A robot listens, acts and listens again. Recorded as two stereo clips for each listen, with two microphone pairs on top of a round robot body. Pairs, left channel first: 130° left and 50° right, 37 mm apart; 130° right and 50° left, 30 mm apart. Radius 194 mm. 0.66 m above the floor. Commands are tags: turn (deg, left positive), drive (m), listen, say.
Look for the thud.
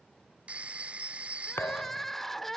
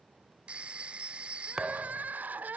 <turn deg="120"/>
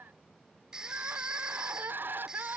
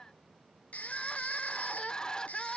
<say>Facing where the thud came from. I can't hear it now.</say>